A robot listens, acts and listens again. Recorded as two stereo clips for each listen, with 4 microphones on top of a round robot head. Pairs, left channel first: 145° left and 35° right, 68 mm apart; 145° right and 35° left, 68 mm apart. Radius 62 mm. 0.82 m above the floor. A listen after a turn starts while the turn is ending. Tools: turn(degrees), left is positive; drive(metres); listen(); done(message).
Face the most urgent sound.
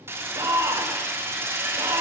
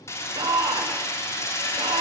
turn(degrees=-10)
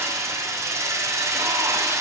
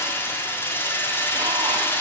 listen()
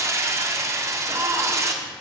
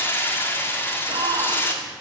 done("Found it: a shout, straight ahead, 2 to 4 m away.")